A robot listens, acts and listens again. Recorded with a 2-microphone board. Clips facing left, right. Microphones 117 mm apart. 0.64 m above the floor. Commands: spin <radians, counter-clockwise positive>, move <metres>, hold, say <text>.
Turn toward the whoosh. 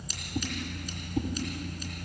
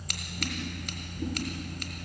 spin 1.57
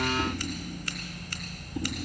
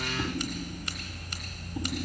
hold
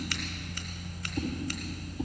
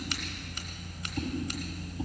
say Found it: a whoosh, straight ahead.